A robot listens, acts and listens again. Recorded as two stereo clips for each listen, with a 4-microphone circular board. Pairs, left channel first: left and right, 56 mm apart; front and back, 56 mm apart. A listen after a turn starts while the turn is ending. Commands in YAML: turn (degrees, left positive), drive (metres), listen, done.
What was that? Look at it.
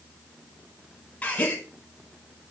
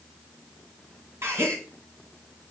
turn: 150
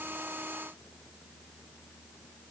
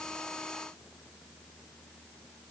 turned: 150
done: "Facing where the gasp came from. I can't hear it now."